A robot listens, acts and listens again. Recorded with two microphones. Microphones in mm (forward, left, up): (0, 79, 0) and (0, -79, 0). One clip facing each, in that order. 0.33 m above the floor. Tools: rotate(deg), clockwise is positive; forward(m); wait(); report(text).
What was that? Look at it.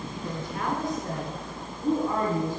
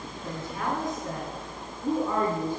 rotate(-25)
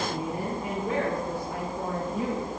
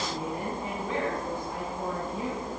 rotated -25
rotate(-130)
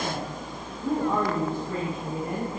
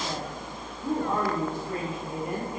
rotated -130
rotate(15)
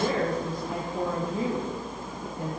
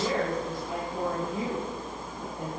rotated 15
report("Facing the woman speaking.")